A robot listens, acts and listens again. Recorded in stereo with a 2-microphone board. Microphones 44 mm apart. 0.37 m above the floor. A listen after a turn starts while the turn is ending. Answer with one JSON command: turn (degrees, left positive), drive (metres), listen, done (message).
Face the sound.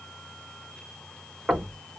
{"turn": -30}
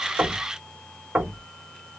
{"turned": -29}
{"turn": -115}
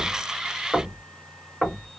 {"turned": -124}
{"turn": 10}
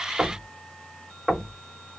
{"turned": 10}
{"done": "Facing the knocking, 1 to 2 m away."}